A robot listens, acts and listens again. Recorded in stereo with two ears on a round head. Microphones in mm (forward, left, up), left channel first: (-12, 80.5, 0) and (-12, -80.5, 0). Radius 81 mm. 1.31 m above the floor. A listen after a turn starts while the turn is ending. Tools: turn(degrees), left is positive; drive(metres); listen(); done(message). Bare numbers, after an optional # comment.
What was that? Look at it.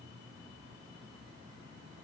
listen()
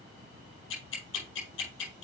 # The ticking: about 70° left or 110° left.
turn(70)
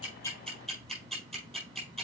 done("Found it: ticking, straight ahead.")